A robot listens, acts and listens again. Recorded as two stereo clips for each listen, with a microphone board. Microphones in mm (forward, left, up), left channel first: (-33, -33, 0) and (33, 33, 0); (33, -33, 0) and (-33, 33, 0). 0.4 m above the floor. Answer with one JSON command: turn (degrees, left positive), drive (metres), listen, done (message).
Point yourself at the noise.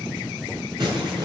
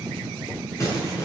{"turn": 10}
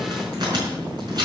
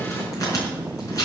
{"done": "Found it: crumpling, straight ahead, over 4 m away."}